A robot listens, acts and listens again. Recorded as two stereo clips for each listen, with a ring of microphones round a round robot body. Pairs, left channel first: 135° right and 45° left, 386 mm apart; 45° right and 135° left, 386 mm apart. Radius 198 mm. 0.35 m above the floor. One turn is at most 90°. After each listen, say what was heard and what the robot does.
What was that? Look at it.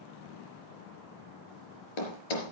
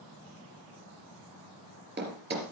The thud: 160° right. Turn 90° right.
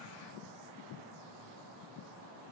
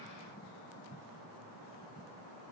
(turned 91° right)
Nothing new. It was at 70° right. Turn 70° right.
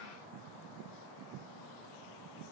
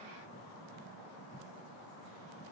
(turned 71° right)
Facing where the thud came from. I can't hear it now.